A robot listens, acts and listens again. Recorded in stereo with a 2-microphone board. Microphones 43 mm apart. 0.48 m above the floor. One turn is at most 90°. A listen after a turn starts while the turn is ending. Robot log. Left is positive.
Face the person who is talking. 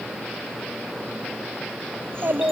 note: The child speaking: about 65° right or 115° right.
cmd yaw -65
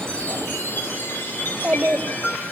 note: So it is at 30° right.
cmd yaw -30
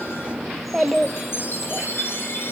end: Found it: a child speaking, straight ahead.